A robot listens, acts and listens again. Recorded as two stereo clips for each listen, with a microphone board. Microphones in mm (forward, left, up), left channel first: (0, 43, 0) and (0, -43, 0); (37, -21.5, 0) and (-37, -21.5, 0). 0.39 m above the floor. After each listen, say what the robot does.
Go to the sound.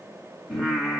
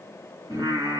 Turn 175° left.
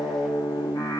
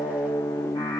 Turn 40° left.
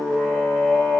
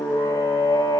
Drive 1.0 m forward.
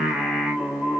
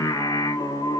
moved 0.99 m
Drive 1.0 m forward.
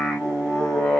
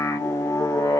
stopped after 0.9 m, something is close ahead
Arrived at the singing, straight ahead.